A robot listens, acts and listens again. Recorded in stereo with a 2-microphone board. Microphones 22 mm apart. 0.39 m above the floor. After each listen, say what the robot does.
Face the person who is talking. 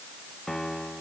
Keep listening.
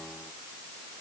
Keep listening.
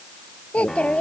Turn 60° left.
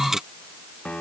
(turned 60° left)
Keep listening.
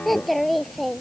Facing the child speaking.